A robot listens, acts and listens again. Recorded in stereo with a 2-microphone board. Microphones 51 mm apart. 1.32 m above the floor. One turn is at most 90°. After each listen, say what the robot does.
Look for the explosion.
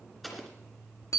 Turn 30° left.
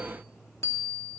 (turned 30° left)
Keep listening.
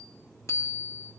I heard an explosion, but can't make it out now. It was about 30° right or 150° left.